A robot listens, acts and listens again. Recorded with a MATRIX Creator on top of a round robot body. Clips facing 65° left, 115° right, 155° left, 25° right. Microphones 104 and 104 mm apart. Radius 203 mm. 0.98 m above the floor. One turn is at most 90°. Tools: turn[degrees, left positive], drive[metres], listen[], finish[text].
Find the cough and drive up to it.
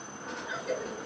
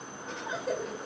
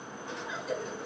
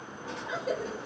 Thought: The cough: 60° right.
Action: turn[-60]
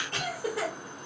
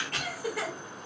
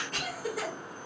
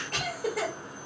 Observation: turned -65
Action: drive[1.0]
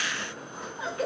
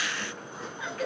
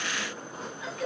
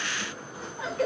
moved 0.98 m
Thought: The cough is now 10° left.
Action: turn[10]
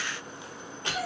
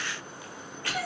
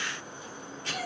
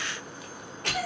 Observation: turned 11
Action: drive[1.0]
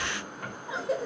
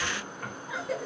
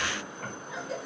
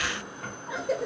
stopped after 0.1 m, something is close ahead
Action: finish[Arrived at the cough, straight ahead.]